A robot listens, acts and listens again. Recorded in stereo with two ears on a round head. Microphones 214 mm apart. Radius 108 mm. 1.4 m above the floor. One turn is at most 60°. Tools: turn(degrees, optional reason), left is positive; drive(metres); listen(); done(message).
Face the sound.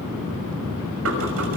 turn(degrees=-60, reason="The knocking: about 65° right or 115° right.")
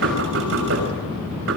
turn(degrees=-55, reason="So it is at 55° right.")
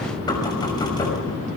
turn(degrees=15, reason="The knocking is now 15° left.")
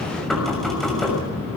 done("Facing the knocking, over 4 m away.")